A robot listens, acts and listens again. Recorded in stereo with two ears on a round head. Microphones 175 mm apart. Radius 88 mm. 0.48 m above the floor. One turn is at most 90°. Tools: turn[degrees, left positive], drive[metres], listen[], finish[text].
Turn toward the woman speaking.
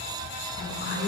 Thought: The woman speaking: about 60° left or 120° left.
Action: turn[60]
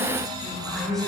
Action: finish[Found it: a woman speaking, straight ahead, over 4 m away.]